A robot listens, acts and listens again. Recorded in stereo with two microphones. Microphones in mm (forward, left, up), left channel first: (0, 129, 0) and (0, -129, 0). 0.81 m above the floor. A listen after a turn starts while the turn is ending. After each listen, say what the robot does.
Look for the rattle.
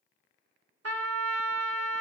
Keep listening.
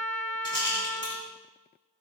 Turn 45° left.
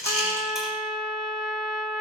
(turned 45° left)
Keep listening.
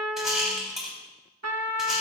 Facing the rattle, over 4 m away.